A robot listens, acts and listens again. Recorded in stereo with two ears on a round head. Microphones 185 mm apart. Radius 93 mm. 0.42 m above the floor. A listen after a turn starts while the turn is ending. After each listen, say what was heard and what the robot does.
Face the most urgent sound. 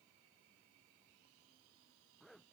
Keep listening.
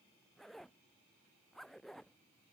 Keep listening.
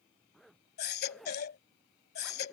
The baby crying: about 50° left or 130° left. Turn 50° left.
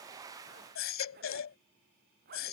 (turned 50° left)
So it is at 75° left. Turn 75° left.
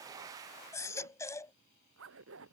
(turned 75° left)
The baby crying is now 15° left. Turn 15° left.
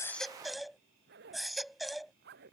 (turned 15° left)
Found it: a baby crying, straight ahead.